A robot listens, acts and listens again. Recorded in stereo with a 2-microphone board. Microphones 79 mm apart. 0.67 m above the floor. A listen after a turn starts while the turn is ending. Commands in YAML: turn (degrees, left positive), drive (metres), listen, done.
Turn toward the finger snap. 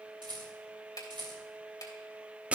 turn: 55
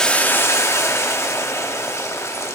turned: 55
listen: true
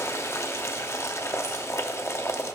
listen: true
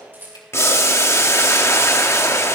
done: "I heard a finger snap, but can't make it out now. It was about straight ahead or 70° left."